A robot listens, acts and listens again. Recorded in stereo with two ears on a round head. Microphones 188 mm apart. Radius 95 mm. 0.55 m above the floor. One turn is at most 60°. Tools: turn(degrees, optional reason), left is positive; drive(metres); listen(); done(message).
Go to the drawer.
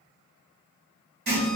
listen()
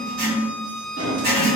turn(degrees=-60)
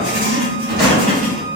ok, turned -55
turn(degrees=-45, reason="So it is at 45° right.")
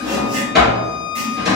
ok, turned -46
drive(metres=1.0)
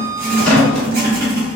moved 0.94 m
drive(metres=1.0)
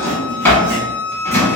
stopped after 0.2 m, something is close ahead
turn(degrees=10, reason="The drawer is now 10° left.")
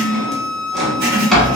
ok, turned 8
done("Arrived at the drawer, straight ahead.")